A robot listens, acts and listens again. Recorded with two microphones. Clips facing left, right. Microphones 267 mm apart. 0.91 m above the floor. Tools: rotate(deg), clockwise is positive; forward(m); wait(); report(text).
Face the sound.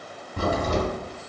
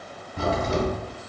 rotate(-50)
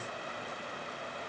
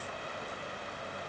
wait()
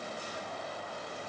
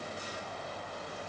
report("I heard a crack, but can't make it out now. It was about straight ahead or 80° left.")